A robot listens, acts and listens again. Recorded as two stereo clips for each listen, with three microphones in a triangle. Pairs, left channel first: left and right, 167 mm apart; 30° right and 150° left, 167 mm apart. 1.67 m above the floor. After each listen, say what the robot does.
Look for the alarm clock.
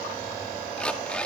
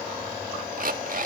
Turn 175° left.
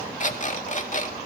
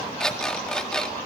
Turn 55° left.
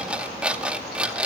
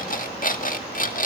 Facing the alarm clock, 1 to 2 m away.